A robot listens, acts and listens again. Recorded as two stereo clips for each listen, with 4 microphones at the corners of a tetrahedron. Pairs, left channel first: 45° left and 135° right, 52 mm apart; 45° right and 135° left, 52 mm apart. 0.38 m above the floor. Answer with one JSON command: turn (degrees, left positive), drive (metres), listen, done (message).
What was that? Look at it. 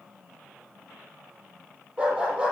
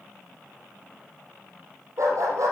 {"turn": 150}
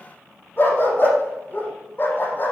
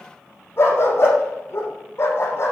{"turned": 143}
{"done": "Facing the dog barking."}